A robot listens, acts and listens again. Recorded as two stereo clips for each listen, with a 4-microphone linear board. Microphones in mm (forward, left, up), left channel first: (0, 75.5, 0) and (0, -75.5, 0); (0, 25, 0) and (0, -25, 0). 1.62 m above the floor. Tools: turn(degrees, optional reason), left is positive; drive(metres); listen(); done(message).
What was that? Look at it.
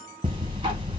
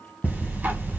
turn(degrees=-30, reason="The ticking: about 30° right or 150° right.")
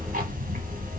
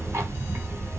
turn(degrees=-115, reason="So it is at 115° right.")
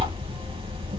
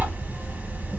turn(degrees=-40, reason="The ticking is now 40° right.")
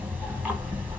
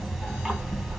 turn(degrees=-10, reason="The ticking is now 10° right.")
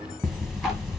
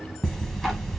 done("Found it: ticking, straight ahead, 1 to 2 m away.")